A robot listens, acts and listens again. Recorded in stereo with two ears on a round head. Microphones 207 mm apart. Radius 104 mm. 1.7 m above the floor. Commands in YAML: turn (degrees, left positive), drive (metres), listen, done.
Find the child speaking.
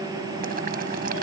listen: true
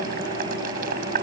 listen: true
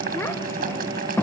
turn: 30
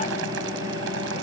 listen: true
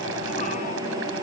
listen: true
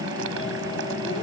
done: "I heard a child speaking, but can't make it out now. It was about 20° right or 140° left."